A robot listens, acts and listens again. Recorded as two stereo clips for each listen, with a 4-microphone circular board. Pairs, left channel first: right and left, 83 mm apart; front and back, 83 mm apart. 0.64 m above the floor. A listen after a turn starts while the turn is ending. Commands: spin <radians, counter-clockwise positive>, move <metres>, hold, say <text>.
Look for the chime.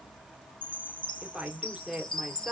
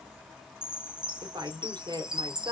spin -1.75
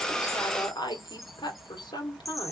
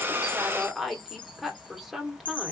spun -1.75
say Found it: a chime, straight ahead, under 1 m away.